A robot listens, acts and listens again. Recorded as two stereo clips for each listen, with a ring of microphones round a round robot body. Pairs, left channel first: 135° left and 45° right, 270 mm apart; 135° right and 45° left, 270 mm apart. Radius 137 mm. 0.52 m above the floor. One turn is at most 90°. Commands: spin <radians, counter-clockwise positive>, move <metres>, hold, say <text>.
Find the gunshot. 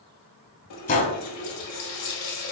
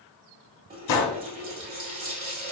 spin -1.57
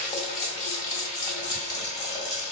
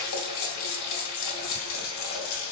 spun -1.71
spin -1.13
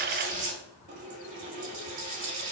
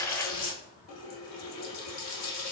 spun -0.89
spin -0.26
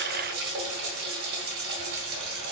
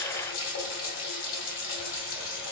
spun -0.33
say Facing where the gunshot came from. I can't hear it now.